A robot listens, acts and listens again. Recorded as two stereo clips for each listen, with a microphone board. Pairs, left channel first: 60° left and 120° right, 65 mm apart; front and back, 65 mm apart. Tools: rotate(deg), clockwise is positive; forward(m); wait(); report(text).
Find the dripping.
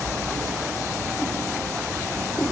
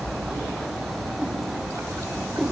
wait()
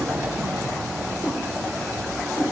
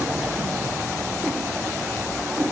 wait()
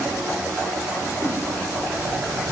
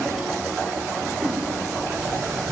report("I can't make out dripping to turn to.")